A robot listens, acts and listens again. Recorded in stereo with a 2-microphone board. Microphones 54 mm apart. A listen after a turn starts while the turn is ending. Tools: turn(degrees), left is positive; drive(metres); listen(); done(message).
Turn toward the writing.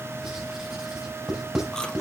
turn(degrees=-30)
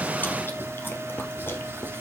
listen()
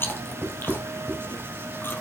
turn(degrees=-135)
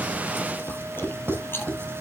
turn(degrees=-45)
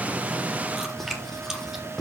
turn(degrees=10)
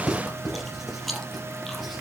done("Facing the writing, over 4 m away.")